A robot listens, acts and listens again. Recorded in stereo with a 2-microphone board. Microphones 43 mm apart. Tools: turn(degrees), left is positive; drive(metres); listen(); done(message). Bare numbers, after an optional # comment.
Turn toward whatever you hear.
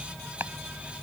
# The chopping: about 70° right or 110° right.
turn(-70)
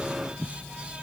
done("Facing the chopping.")